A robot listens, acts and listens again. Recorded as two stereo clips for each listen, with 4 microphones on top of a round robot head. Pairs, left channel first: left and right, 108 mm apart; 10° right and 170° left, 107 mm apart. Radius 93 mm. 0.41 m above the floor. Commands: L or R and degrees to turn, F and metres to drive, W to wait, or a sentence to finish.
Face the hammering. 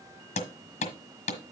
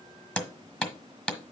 L75
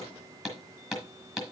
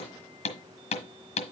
Facing the hammering.